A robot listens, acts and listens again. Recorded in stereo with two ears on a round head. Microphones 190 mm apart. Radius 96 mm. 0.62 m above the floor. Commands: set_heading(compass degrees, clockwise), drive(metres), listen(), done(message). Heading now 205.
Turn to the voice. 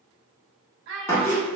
set_heading(265)
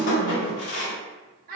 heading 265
set_heading(315)
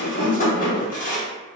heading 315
listen()
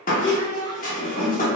set_heading(300)
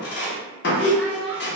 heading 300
done("Found it: a child speaking, straight ahead.")